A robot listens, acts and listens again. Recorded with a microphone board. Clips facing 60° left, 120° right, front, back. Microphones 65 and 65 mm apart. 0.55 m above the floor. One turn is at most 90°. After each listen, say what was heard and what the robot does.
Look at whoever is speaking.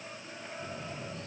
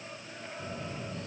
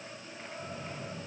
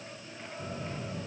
Keep listening.
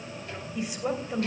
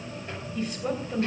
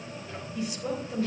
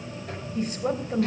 The woman speaking: 140° left. Turn 90° left.
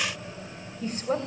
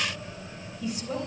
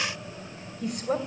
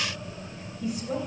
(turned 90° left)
The woman speaking is now 20° left. Turn 20° left.
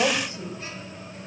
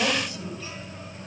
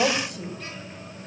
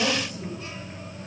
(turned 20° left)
Found it: a woman speaking, straight ahead.